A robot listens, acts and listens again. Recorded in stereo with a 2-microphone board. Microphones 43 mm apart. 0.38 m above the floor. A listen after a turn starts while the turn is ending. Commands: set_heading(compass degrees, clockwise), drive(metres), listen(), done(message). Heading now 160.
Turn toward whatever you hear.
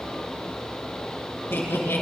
set_heading(70)
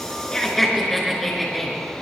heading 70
done("Found it: laughter, straight ahead, over 4 m away.")